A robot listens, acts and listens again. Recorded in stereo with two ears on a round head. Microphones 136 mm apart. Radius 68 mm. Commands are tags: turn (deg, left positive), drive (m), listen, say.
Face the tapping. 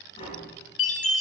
<turn deg="40"/>
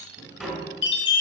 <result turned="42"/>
<say>Found it: tapping, straight ahead, 2 to 4 m away.</say>